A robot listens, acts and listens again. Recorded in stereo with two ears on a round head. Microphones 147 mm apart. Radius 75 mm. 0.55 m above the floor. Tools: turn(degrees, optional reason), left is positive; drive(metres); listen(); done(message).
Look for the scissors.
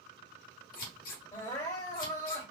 turn(degrees=60, reason="The scissors: about 60° left or 120° left.")
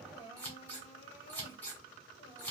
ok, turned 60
turn(degrees=15, reason="So it is at 15° left.")
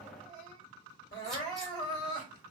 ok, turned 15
listen()
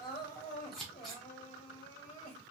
done("Found it: scissors, straight ahead.")